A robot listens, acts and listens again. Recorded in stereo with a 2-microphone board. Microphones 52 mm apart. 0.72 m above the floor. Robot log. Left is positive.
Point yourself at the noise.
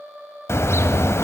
note: The car horn: about 60° left or 120° left.
cmd yaw +60
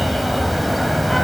end: Facing the car horn, 2 to 4 m away.